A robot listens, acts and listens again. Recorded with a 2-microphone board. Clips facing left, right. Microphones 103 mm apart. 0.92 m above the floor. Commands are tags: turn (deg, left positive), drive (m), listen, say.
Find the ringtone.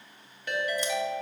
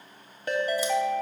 <turn deg="-35"/>
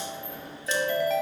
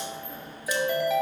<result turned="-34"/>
<say>Found it: a ringtone, straight ahead, under 1 m away.</say>